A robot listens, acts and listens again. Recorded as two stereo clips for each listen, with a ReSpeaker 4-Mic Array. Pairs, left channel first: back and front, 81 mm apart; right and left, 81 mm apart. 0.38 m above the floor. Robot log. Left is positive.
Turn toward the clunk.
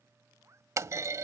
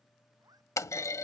note: The clunk: 45° right.
cmd yaw -45
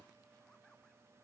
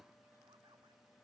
end: I heard a clunk from this way, but can't make it out now.